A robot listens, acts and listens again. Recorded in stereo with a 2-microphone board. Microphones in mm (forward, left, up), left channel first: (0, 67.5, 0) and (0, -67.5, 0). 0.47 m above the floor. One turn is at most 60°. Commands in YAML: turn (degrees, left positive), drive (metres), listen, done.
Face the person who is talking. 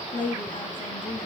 turn: 60
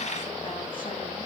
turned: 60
turn: 30
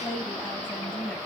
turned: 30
turn: 10
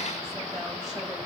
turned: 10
listen: true
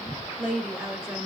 done: "Facing the woman speaking."